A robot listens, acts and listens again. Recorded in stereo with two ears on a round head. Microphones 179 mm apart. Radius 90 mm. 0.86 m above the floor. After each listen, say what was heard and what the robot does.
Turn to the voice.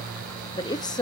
The woman speaking: about 20° left or 160° left. Turn 20° left.
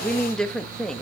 Facing the woman speaking, under 1 m away.